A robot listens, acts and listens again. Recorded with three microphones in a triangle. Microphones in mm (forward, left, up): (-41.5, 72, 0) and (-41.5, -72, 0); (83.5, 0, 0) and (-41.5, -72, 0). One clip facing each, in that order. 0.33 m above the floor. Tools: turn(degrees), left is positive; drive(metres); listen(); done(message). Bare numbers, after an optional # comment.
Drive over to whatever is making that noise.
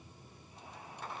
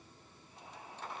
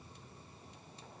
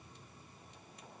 listen()
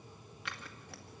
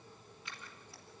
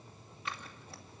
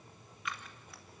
# The scissors: 85° left.
turn(85)
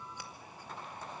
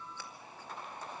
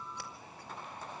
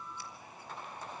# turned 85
listen()
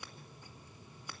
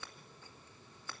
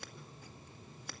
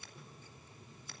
# The scissors is now 15° left.
turn(15)
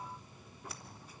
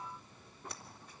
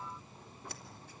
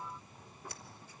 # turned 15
listen()
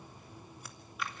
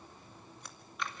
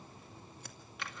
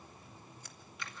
drive(1.0)
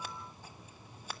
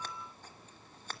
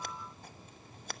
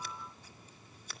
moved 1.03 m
# The scissors is now 10° left.
turn(10)
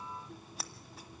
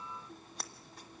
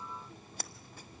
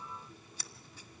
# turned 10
drive(1.0)
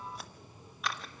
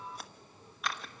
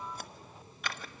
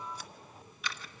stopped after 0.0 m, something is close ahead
done("Arrived at the scissors, straight ahead.")